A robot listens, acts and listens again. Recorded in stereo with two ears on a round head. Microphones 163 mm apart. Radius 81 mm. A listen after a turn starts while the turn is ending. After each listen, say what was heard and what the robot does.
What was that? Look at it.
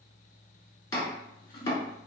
The chopping: about 20° left or 160° left. Turn 20° left.
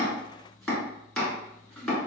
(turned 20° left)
Facing the chopping.